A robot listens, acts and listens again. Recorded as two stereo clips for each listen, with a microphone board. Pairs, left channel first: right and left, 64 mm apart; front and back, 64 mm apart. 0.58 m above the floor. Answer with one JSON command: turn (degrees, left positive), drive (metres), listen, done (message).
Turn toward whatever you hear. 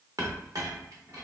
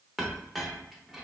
{"turn": 95}
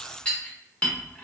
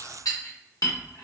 {"turn": -20}
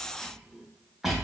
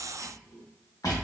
{"done": "Found it: a clink, straight ahead, under 1 m away."}